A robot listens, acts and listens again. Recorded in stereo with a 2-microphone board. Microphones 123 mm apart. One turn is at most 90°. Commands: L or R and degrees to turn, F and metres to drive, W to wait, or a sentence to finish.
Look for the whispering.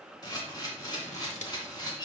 W
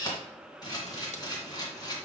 W
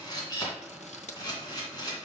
I can't make out whispering to turn to.